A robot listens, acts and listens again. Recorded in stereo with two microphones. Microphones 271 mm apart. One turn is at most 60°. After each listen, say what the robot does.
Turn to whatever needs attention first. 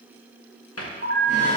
Turn 55° right.
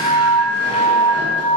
Facing the alarm.